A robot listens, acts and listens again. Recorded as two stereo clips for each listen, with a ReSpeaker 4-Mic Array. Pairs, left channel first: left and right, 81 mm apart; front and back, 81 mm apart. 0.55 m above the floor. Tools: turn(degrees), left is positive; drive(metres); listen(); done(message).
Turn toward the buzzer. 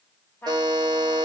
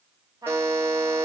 turn(degrees=-120)
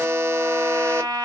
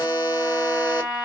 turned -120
turn(degrees=-25)
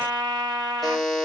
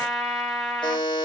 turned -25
done("Found it: a buzzer, straight ahead, 1 to 2 m away.")